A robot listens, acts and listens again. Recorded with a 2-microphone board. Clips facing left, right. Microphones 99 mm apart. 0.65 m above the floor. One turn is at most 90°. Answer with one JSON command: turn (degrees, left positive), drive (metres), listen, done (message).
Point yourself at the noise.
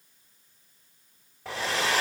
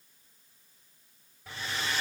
{"turn": 90}
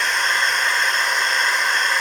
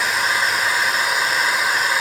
{"done": "Facing the hair dryer."}